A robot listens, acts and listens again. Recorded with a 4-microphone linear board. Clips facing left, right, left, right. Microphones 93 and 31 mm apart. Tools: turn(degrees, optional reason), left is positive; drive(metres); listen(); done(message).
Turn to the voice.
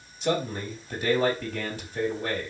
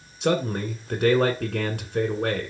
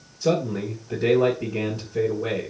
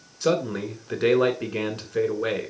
turn(degrees=-60, reason="The man speaking: about 60° right or 120° right.")
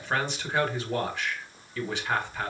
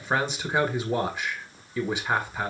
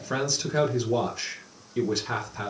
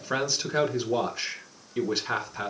turn(degrees=-15, reason="So it is at 15° right.")
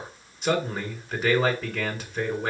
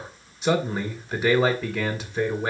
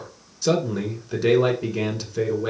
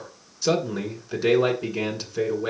done("Facing the man speaking, 2 to 4 m away.")